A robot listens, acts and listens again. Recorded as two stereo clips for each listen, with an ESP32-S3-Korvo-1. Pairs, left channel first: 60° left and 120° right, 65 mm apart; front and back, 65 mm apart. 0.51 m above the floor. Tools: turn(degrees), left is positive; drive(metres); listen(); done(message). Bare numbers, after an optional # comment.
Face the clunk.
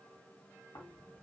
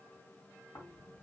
listen()
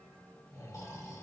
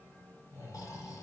listen()
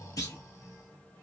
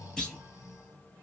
# The clunk: 75° left.
turn(75)
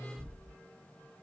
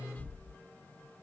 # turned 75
done("Facing where the clunk came from. I can't hear it now.")